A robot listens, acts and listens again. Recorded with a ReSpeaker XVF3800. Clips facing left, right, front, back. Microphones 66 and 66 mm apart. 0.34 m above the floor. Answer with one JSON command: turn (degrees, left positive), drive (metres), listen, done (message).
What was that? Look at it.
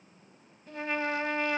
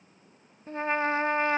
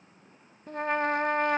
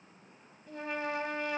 {"turn": -30}
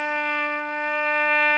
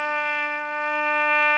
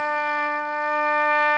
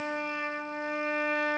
{"done": "Facing the trumpet, under 1 m away."}